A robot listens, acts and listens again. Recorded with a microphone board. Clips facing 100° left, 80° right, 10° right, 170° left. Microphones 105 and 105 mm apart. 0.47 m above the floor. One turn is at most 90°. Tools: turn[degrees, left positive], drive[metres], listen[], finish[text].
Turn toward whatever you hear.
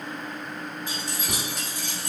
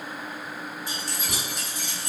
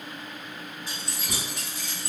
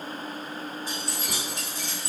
Thought: The keys jangling: 115° left.
Action: turn[90]
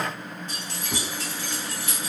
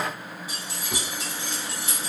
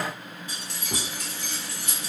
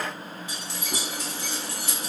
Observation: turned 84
Thought: The keys jangling is now 30° right.
Action: turn[-30]
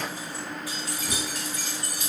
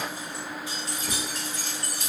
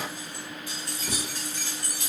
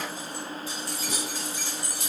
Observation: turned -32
Thought: The keys jangling is now 30° right.
Action: turn[-30]
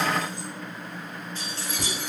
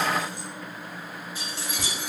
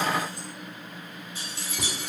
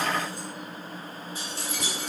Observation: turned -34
Action: finish[Found it: keys jangling, straight ahead.]